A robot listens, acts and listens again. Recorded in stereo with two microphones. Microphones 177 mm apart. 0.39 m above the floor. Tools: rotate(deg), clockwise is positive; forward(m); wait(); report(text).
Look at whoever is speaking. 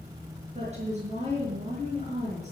rotate(40)
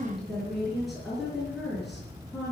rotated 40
report("Facing the woman speaking, over 4 m away.")